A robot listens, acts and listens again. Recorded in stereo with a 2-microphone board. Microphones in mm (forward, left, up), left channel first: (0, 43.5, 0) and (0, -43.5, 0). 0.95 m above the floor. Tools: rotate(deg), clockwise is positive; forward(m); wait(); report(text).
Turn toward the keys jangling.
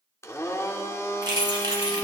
rotate(60)
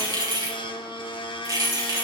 rotate(45)
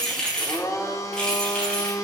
rotate(-10)
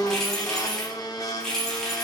report("Found it: keys jangling, straight ahead.")